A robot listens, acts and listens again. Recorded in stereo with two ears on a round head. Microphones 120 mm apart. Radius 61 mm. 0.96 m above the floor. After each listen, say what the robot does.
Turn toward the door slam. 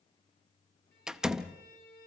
Turn 30° right.
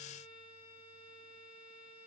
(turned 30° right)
Keep listening.
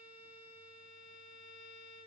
I heard a door slam, but can't make it out now. It was about 25° left or 145° right.